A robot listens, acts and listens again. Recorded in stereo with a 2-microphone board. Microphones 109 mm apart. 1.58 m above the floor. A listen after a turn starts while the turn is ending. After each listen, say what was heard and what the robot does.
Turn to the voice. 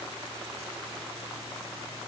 Keep listening.
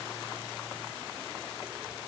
Keep listening.
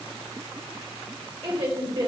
The woman speaking: about 55° right or 125° right. Turn 55° right.
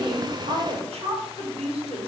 So it is at 70° right. Turn 70° right.
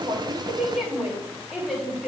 Facing the woman speaking, 2 to 4 m away.